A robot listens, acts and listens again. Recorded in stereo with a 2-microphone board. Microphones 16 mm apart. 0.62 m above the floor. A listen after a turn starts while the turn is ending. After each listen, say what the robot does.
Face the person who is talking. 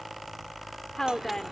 Turn 40° left.
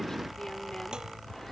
Keep listening.
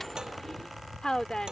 Turn 90° left.
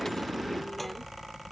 Keep listening.
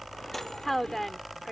Turn 20° left.
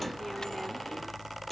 Keep listening.
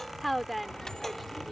Found it: a woman speaking, straight ahead.